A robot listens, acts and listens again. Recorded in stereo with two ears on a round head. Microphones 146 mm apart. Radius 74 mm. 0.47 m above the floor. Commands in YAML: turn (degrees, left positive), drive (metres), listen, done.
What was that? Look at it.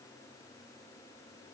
listen: true
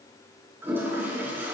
turn: -30
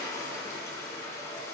turn: 20
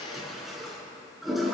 done: "Facing the toilet flushing, 2 to 4 m away."